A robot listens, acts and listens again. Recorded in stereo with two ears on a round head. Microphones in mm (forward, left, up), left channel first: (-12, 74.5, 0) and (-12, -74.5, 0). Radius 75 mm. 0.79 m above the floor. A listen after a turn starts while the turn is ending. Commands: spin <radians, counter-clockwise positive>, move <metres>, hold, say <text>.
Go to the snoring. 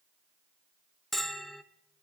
hold
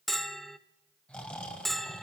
spin 0.52
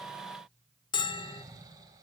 spin -0.35
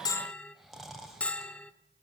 move 1.0
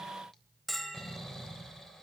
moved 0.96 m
move 1.0
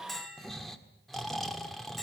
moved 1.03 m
move 1.0
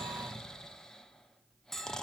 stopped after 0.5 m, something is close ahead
say I am next to the snoring.